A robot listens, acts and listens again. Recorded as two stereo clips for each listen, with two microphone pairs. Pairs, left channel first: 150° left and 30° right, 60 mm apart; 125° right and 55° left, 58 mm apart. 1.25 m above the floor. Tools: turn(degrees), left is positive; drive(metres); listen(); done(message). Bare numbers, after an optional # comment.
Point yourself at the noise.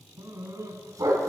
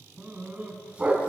# The dog barking: 15° right.
turn(-15)
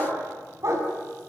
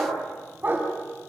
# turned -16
done("Facing the dog barking.")